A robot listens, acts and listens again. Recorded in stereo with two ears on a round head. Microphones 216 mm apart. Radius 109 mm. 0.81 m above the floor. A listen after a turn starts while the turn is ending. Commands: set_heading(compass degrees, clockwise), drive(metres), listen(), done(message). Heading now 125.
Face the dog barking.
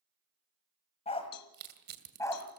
set_heading(95)
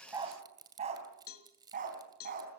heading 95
set_heading(130)
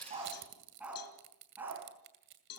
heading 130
set_heading(140)
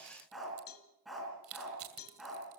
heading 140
done("Found it: a dog barking, straight ahead, over 4 m away.")